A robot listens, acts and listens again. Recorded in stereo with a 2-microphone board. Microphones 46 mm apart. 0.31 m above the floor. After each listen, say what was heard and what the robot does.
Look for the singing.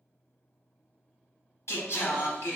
The singing: about 70° left or 110° left. Turn 70° left.
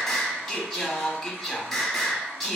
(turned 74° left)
Facing the singing, under 1 m away.